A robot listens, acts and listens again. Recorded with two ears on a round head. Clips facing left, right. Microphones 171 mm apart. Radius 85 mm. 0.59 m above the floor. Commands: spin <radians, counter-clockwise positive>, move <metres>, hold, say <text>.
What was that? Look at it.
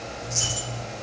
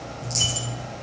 spin -0.79
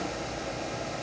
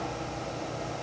hold
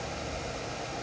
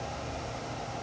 say I heard a dropped coin, but can't make it out now. It was about straight ahead or 90° right.